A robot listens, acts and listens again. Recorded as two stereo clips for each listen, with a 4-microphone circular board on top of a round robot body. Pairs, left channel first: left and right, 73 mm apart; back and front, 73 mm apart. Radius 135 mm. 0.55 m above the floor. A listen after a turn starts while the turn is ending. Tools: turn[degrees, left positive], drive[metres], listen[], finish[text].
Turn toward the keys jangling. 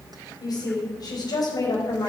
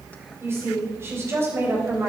Action: listen[]
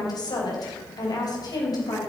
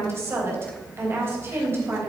Action: listen[]
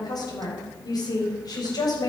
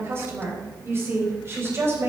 Action: finish[I can't make out keys jangling to turn to.]